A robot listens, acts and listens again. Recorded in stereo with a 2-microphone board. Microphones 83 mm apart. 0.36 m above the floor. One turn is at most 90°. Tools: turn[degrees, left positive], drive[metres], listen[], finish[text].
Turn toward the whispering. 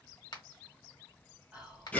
Thought: The whispering: about 15° right or 165° right.
Action: turn[-15]
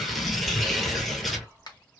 Thought: So it is at 150° right.
Action: turn[-90]
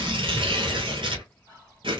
Thought: The whispering is now 55° right.
Action: turn[-55]
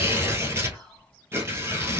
Action: finish[Facing the whispering.]